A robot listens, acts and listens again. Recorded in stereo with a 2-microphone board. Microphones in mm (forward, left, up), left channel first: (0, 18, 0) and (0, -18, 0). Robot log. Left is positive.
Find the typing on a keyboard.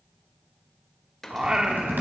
note: The typing on a keyboard: about 70° right or 110° right.
cmd yaw -70
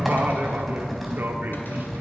end: Facing the typing on a keyboard.